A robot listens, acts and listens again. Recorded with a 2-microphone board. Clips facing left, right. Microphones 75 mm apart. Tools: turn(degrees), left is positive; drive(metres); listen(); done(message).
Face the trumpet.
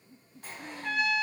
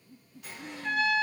turn(degrees=45)
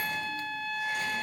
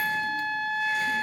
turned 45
done("Facing the trumpet.")